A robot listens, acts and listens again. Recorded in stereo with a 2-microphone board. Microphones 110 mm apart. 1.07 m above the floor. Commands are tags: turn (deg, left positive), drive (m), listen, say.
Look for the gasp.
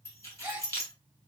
<turn deg="-25"/>
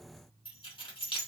<listen/>
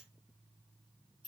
<say>I heard a gasp, but can't make it out now. It was about straight ahead or 130° right.</say>